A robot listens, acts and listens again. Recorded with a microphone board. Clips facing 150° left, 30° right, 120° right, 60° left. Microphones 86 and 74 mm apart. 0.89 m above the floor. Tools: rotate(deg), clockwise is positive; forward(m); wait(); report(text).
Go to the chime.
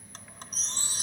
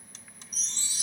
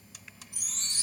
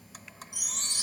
rotate(170)
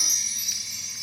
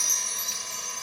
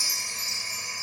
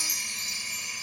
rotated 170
rotate(-25)
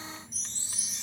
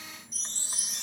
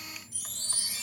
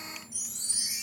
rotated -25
rotate(10)
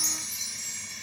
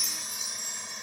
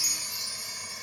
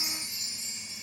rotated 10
forward(1.0)
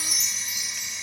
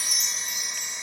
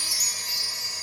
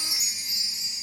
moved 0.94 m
forward(1.0)
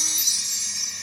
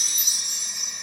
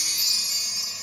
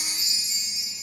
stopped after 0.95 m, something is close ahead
report("I am next to the chime.")